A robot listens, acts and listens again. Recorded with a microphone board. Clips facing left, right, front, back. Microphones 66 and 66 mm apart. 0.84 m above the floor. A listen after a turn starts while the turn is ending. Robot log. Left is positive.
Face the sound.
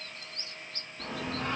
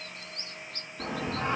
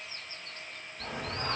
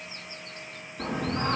note: The singing: 150° right.
cmd yaw -150
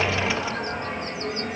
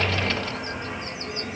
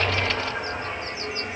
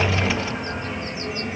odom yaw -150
note: The singing is now 75° left.
cmd yaw +75
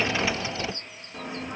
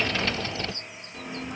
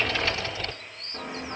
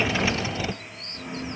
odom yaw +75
note: The singing is now 25° left.
cmd yaw +25
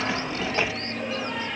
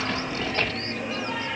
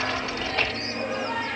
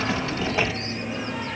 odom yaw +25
end: Found it: singing, straight ahead, 1 to 2 m away.